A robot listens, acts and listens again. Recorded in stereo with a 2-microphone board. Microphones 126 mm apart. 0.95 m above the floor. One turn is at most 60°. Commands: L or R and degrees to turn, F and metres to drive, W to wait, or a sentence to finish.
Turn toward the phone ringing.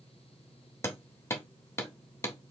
W
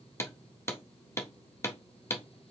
W
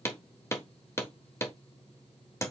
I can't make out a phone ringing to turn to.